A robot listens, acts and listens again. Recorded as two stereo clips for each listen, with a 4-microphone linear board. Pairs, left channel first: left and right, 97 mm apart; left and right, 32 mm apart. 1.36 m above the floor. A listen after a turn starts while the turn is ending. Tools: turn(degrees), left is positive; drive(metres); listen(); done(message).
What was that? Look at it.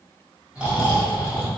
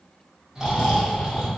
turn(degrees=-30)
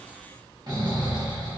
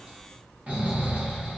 turn(degrees=-135)
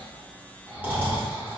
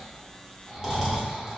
turn(degrees=-15)
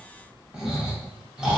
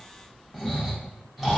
done("Found it: snoring, straight ahead, under 1 m away.")